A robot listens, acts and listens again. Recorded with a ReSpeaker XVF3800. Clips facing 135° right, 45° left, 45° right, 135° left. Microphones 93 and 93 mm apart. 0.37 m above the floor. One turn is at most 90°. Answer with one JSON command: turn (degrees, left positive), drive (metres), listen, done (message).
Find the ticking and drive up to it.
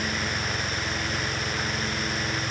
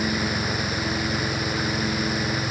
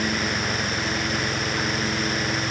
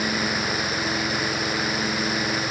{"listen": true}
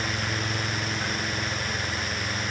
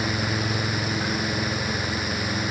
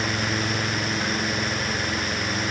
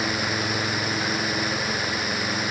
{"listen": true}
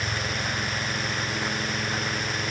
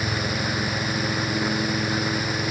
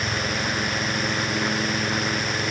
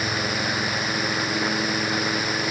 {"done": "I can't make out ticking."}